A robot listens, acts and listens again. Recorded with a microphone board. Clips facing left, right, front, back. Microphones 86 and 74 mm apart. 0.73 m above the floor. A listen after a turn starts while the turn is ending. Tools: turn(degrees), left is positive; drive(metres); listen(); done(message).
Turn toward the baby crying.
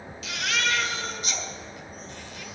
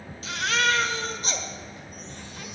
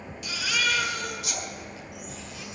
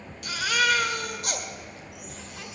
turn(degrees=-145)
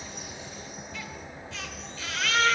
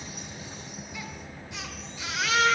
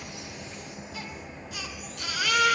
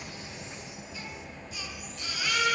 turn(degrees=-15)
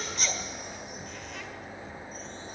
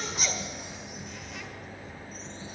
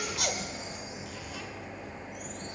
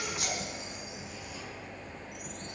done("Found it: a baby crying, straight ahead, 1 to 2 m away.")